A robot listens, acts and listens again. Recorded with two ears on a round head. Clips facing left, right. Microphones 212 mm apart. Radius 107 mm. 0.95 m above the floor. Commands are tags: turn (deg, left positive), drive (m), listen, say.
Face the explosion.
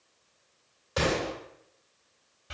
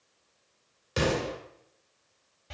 <turn deg="-35"/>
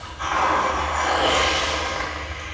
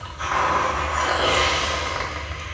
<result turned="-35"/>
<listen/>
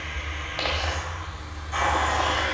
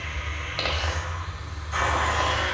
<say>I heard an explosion, but can't make it out now. It was about straight ahead or 110° right.</say>